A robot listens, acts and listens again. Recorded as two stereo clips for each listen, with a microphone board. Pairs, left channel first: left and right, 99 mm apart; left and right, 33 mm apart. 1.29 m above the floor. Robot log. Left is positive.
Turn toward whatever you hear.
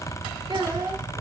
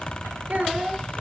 note: The child speaking: about 55° right or 125° right.
cmd yaw -55
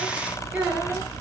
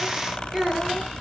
note: So it is at 15° right.
cmd yaw -15
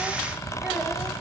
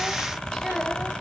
note: The child speaking is now 10° right.
cmd yaw -10
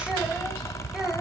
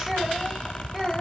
end: Found it: a child speaking, straight ahead.